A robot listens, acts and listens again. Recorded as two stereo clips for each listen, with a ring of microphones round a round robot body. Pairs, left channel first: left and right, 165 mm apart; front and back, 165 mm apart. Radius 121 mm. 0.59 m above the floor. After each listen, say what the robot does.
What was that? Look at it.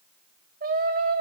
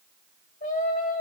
Turn 55° right.
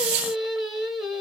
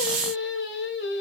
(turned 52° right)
Facing the singing, 2 to 4 m away.